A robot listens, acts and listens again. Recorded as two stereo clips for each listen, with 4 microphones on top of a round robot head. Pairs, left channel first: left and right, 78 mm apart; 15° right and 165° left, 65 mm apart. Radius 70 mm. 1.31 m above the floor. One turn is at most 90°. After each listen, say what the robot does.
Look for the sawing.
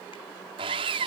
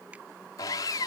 Turn 60° right.
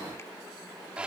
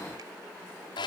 Turn 10° right.
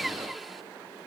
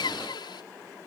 Facing the sawing.